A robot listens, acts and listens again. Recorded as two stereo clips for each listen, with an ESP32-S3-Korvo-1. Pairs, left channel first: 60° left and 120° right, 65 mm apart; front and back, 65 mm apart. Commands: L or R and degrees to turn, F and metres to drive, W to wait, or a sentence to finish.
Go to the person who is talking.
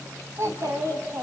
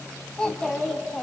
R75
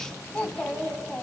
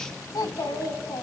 R10
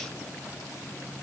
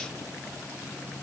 W
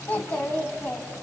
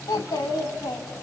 F1.0
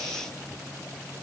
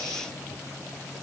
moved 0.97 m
W
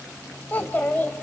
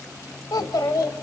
F1.0
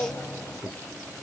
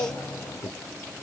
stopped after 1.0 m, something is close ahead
I am next to the child speaking.